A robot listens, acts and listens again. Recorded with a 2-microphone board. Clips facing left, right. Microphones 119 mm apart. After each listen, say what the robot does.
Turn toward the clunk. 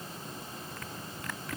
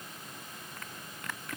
Keep listening.
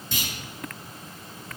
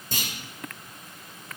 Turn 45° right.
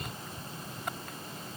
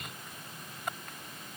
Keep listening.
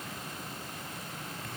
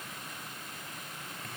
I heard a clunk, but can't make it out now. It was about straight ahead or 90° right.